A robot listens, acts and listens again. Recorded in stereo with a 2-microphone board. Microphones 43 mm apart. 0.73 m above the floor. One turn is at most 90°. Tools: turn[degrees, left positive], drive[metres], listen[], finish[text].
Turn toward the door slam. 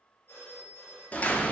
Thought: The door slam: about 35° left or 145° left.
Action: turn[35]
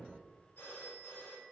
Action: listen[]
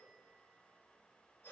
Action: finish[I heard a door slam, but can't make it out now. It was about straight ahead or 110° left.]